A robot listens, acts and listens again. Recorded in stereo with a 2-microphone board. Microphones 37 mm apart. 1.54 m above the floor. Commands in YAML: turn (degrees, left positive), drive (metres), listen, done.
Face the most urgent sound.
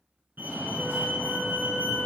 turn: -60
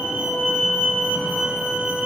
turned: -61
turn: -10
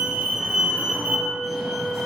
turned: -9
done: "Facing the fire alarm."